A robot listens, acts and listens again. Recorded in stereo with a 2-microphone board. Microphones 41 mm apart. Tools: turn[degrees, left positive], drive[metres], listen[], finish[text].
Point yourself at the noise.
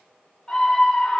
Thought: The scream: about 15° left or 165° left.
Action: turn[15]
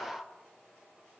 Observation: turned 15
Thought: So it is at 150° left.
Action: turn[150]
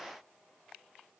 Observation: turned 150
Action: listen[]
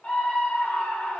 Thought: The scream is now 40° left.
Action: turn[40]
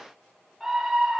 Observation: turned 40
Action: finish[Found it: a scream, straight ahead, 2 to 4 m away.]